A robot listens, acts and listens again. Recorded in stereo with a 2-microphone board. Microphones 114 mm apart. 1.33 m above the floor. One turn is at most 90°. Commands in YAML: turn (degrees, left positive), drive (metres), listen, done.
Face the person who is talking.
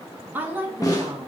turn: -15
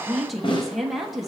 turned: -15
done: "Found it: a woman speaking, straight ahead, 1 to 2 m away."